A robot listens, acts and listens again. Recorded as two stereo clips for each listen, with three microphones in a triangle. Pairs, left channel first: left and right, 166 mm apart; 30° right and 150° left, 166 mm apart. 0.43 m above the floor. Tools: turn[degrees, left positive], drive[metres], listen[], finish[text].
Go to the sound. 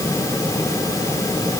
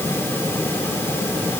Action: listen[]
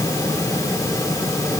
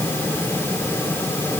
Action: listen[]
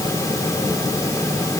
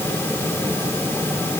Action: finish[I can't make out anything.]